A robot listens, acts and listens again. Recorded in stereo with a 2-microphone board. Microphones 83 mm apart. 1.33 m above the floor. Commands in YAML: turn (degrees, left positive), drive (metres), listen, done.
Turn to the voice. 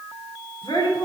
turn: 90
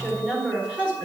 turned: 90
turn: -15
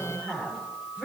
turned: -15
turn: -10
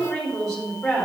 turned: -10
done: "Facing the woman speaking, 2 to 4 m away."